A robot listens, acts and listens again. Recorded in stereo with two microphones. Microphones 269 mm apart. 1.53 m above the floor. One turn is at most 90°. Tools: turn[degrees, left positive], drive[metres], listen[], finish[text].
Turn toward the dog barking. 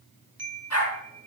Thought: The dog barking: about 60° left or 120° left.
Action: turn[60]
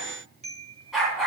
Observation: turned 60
Action: finish[Found it: a dog barking, straight ahead, over 4 m away.]